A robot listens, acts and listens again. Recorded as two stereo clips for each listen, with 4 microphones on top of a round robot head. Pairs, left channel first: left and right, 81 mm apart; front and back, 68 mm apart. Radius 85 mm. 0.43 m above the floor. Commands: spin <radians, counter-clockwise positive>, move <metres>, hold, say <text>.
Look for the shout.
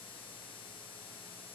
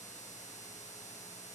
hold
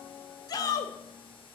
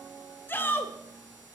spin 0.96
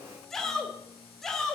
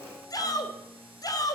say Facing the shout, 2 to 4 m away.